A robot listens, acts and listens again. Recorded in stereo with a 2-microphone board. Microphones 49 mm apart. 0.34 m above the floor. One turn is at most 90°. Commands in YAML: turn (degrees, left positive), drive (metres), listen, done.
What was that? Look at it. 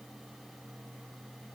listen: true
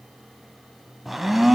turn: -30
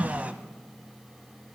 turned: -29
turn: -90
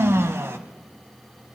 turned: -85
turn: -60
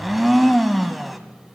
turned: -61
done: "Facing the blender, under 1 m away."